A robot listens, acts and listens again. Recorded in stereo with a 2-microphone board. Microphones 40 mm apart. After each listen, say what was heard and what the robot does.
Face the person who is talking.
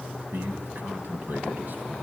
The man speaking: about 55° right or 125° right. Turn 55° right.
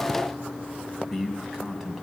Found it: a man speaking, straight ahead, 2 to 4 m away.